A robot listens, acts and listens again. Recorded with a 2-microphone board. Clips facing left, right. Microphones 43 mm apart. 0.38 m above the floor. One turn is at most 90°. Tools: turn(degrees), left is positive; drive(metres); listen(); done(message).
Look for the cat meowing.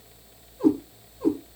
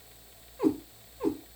turn(degrees=-70)
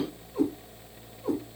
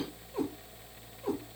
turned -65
turn(degrees=-45)
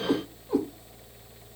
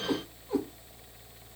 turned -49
done("Facing the cat meowing, over 4 m away.")